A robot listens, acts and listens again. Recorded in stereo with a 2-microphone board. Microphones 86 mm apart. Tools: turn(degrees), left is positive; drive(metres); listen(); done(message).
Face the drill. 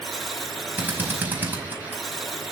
turn(degrees=-20)
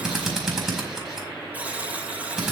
done("Facing the drill.")